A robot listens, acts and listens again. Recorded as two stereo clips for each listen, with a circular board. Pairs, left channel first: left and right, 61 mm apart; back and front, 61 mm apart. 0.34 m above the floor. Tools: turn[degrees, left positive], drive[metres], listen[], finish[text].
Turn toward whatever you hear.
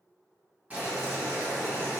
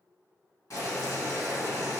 Thought: The boiling: 155° right.
Action: turn[-155]
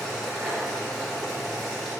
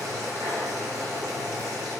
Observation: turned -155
Action: finish[Facing the boiling, under 1 m away.]